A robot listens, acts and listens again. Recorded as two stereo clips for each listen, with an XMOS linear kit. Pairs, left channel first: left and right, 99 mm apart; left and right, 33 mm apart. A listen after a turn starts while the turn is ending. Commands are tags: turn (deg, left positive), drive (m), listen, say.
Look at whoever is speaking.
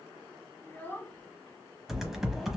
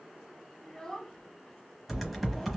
<turn deg="15"/>
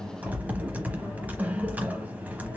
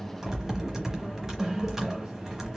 <listen/>
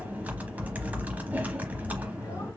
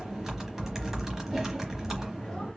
<listen/>
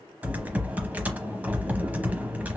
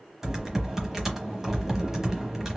<say>I heard a child speaking, but can't make it out now. It was about straight ahead or 150° left.</say>